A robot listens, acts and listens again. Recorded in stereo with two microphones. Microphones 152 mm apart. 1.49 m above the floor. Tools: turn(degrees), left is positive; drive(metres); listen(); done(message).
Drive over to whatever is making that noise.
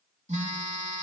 turn(degrees=-50)
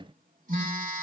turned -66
turn(degrees=-65)
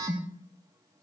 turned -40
turn(degrees=-25)
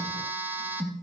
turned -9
turn(degrees=-15)
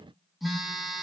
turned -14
drive(metres=1.0)
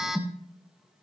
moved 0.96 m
drive(metres=1.0)
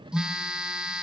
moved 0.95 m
drive(metres=1.0)
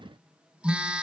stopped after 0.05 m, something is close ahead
done("Arrived at the phone buzzing, straight ahead.")